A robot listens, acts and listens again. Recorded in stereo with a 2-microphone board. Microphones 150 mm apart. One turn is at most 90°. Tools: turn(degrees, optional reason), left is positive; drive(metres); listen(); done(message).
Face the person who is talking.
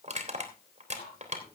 listen()
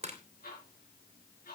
listen()
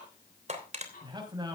turn(degrees=-25, reason="The man speaking: about 25° right or 155° right.")
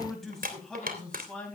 done("Facing the man speaking.")